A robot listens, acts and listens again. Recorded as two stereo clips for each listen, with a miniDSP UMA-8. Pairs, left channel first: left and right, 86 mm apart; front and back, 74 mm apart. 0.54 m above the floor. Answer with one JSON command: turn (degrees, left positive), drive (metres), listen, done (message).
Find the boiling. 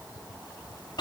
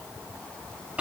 {"listen": true}
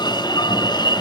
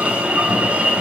{"listen": true}
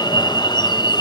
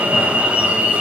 {"done": "I can't make out boiling to turn to."}